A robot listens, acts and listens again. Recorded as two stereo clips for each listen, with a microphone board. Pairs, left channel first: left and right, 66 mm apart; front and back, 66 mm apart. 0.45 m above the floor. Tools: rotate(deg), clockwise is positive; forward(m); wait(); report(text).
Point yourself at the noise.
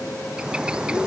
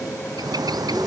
rotate(165)
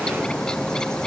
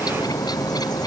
rotate(-10)
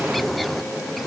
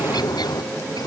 report("Facing the bird.")